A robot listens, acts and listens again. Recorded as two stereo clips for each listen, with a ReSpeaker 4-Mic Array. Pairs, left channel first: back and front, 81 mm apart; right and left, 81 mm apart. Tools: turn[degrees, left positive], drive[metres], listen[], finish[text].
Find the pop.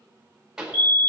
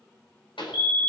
Thought: The pop: 85° right.
Action: turn[-85]
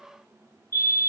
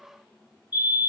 Action: finish[I heard a pop from this way, but can't make it out now.]